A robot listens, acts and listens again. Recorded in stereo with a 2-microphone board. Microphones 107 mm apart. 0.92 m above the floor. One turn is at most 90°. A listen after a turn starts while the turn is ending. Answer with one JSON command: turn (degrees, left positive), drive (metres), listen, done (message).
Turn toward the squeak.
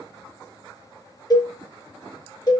{"listen": true}
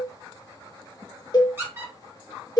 {"turn": -20}
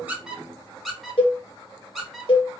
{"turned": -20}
{"done": "Facing the squeak."}